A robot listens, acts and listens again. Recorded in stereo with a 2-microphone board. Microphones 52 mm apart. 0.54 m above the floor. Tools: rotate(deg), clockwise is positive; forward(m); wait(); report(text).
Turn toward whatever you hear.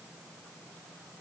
wait()
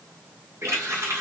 rotate(70)
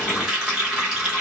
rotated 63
rotate(10)
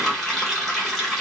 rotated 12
report("Facing the running tap.")